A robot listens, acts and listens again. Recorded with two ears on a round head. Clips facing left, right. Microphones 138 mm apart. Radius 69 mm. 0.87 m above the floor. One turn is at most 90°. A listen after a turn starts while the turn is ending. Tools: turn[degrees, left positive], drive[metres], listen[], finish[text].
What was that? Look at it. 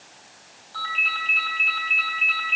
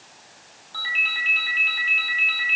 Thought: The ringtone: about 15° right or 165° right.
Action: turn[-15]
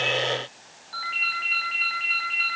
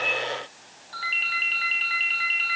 Thought: So it is at 150° right.
Action: turn[-90]
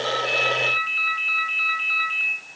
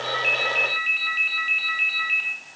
Thought: The ringtone is now 75° right.
Action: turn[-75]
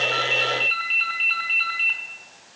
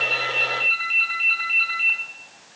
Thought: The ringtone is now 10° right.
Action: turn[-10]
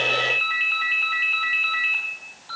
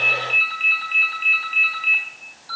Action: finish[Facing the ringtone, over 4 m away.]